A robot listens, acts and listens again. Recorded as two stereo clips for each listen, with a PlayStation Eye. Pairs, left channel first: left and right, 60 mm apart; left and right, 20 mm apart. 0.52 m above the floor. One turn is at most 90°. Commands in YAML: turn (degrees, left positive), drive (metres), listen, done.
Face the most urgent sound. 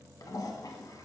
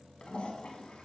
listen: true
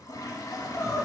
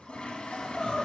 turn: 50
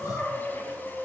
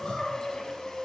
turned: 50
turn: 75
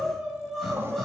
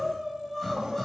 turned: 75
done: "Facing the crying, 2 to 4 m away."